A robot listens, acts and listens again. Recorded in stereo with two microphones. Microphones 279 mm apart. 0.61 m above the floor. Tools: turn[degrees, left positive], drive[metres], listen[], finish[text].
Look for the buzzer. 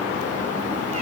Action: listen[]
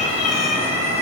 Action: listen[]
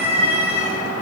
Action: finish[I can't make out a buzzer to turn to.]